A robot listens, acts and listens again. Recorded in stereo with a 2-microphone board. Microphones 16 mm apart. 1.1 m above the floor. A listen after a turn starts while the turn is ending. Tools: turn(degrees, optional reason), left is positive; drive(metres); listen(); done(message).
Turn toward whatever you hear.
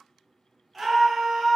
turn(degrees=-15, reason="The scream: about 15° right or 165° right.")
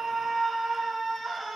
done("Found it: a scream, straight ahead, 1 to 2 m away.")